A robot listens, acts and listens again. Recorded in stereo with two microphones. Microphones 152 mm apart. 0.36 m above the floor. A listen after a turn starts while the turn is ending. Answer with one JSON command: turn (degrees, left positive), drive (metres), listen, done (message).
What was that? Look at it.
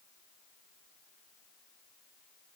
{"listen": true}
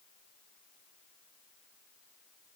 {"listen": true}
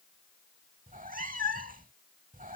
{"turn": -65}
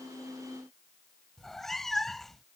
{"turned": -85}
{"done": "Facing the cat meowing."}